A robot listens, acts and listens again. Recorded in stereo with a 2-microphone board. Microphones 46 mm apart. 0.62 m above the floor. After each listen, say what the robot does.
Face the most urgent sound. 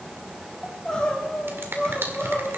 Turn 30° left.
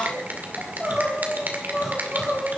Turn 15° right.
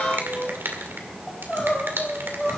Facing the crying, 2 to 4 m away.